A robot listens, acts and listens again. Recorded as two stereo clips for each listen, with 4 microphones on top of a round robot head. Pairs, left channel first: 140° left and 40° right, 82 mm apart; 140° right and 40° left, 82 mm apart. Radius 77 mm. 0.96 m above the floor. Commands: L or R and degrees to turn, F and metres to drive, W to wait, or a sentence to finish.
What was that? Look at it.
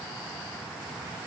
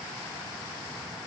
W
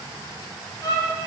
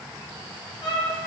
R170
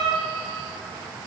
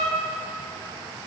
Found it: a violin, straight ahead.